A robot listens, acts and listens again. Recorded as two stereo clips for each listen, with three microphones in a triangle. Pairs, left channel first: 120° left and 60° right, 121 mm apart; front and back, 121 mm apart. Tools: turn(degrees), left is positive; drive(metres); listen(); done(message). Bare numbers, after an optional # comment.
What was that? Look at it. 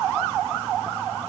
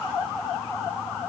listen()
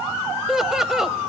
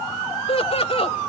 # The laughter: 25° left.
turn(25)
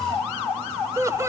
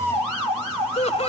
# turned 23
done("Found it: laughter, straight ahead.")